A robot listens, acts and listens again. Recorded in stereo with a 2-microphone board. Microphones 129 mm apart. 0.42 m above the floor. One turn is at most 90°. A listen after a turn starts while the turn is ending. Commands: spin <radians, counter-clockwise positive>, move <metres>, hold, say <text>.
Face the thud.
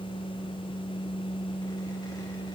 hold
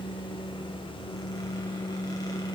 hold
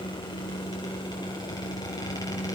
say I can't make out a thud to turn to.